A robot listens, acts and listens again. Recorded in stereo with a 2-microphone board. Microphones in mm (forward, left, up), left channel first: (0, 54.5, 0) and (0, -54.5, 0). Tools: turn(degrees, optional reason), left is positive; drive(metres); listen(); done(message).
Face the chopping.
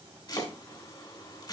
turn(degrees=40, reason="The chopping: about 40° left or 140° left.")
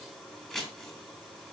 done("Facing the chopping, 2 to 4 m away.")